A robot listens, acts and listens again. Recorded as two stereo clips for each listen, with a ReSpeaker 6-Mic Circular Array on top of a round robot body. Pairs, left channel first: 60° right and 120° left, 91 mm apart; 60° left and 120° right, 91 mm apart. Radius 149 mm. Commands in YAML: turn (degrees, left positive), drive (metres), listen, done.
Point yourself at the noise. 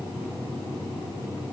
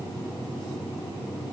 listen: true
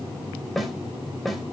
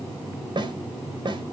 turn: -150
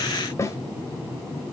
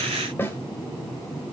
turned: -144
done: "Facing the snare drum."